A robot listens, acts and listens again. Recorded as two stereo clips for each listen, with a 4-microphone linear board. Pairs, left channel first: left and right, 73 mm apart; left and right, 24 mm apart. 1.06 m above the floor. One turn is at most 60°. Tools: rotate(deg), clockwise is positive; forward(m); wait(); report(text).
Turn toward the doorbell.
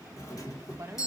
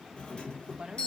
rotate(-50)
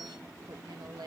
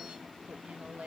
wait()
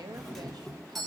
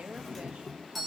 report("Facing the doorbell, 1 to 2 m away.")